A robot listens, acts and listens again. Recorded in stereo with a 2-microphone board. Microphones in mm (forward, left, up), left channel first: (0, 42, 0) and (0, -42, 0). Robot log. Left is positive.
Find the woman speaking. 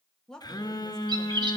cmd yaw +30
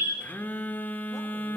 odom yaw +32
cmd idle
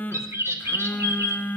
cmd idle
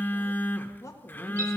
note: So it is at 140° left.
cmd yaw +140
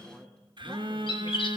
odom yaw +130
note: Nothing new. It was at 10° left.
cmd yaw +10
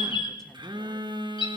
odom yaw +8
cmd idle
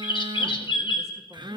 end: Facing where the woman speaking came from. I can't hear it now.